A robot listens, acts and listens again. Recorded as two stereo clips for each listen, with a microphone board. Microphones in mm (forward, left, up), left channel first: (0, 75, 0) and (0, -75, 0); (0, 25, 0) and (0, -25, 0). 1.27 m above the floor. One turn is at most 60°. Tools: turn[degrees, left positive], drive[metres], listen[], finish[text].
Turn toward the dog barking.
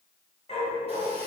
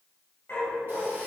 Thought: The dog barking: about 45° left or 135° left.
Action: turn[45]
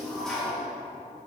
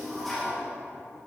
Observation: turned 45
Action: listen[]
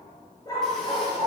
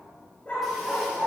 Thought: So it is at 35° left.
Action: turn[35]
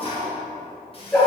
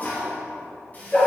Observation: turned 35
Thought: The dog barking is now 15° left.
Action: turn[15]
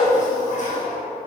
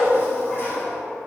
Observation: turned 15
Action: finish[Found it: a dog barking, straight ahead.]